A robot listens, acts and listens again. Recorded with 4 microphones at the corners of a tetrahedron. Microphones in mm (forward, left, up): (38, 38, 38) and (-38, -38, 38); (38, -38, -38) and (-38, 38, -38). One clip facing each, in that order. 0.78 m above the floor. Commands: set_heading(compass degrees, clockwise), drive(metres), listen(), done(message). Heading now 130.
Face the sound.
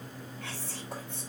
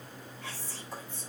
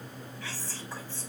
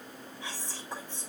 set_heading(65)
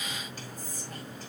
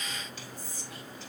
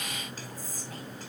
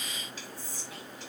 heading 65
done("Facing the whispering, over 4 m away.")